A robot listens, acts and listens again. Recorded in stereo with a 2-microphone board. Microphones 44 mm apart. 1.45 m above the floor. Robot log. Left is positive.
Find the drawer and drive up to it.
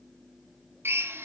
cmd idle
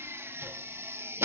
cmd idle
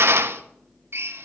end: I can't make out a drawer, only a drill.